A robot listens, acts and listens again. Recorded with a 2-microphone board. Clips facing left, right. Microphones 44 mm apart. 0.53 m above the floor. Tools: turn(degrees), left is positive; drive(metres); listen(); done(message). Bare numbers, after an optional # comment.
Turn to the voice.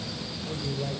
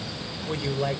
# The woman speaking: about 65° right or 115° right.
turn(-65)
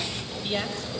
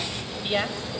# So it is at 25° right.
turn(-25)
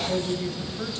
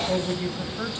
# The woman speaking is now 30° right.
turn(-30)
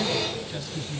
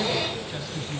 # The woman speaking is now 10° right.
turn(-10)
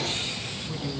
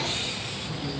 done("Facing the woman speaking.")